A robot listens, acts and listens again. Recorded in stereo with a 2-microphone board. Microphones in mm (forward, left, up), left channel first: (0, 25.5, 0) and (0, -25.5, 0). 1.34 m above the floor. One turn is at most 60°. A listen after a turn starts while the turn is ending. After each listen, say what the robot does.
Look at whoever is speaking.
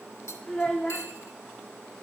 Turn 20° left.
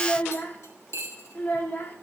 Turn 60° left.
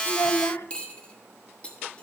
Turn 60° left.
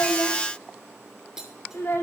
Turn 50° left.
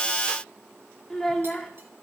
Turn 10° left.
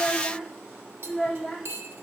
Found it: a child speaking, straight ahead.